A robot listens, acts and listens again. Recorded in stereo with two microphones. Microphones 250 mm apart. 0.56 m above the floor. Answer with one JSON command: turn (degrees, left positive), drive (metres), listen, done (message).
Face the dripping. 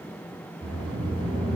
{"listen": true}
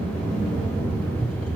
{"listen": true}
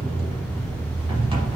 {"done": "I can't make out dripping, only a sliding door."}